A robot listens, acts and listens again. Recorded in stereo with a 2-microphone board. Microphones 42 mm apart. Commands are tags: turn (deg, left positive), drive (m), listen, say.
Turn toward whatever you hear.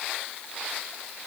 <listen/>
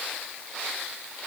<listen/>
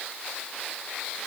<say>I can't make out anything to turn to.</say>